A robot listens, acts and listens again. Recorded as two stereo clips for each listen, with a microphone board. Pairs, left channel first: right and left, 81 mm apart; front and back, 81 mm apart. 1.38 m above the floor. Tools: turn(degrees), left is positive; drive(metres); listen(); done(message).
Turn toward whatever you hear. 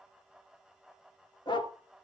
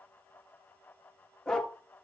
turn(degrees=-80)
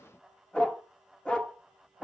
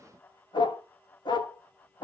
turn(degrees=-15)
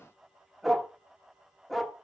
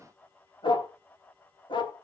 done("Found it: a dog barking, straight ahead.")